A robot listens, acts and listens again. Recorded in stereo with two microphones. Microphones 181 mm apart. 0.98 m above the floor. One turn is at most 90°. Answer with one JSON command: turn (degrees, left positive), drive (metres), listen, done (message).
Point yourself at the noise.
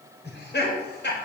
{"turn": 90}
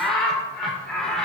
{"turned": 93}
{"done": "Found it: laughter, straight ahead."}